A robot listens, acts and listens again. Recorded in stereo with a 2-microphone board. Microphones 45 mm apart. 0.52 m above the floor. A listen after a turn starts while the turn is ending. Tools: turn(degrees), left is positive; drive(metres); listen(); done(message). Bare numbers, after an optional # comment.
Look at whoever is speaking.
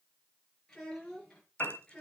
# The child speaking: about 20° left or 160° left.
turn(20)
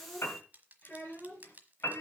# So it is at 130° left.
turn(130)
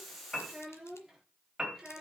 done("Facing the child speaking, over 4 m away.")